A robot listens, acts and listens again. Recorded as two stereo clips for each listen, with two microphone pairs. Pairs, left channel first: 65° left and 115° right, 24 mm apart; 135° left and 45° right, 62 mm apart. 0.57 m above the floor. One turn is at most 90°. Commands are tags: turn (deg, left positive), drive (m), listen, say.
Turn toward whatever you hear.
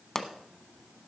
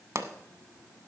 <say>Facing the pop.</say>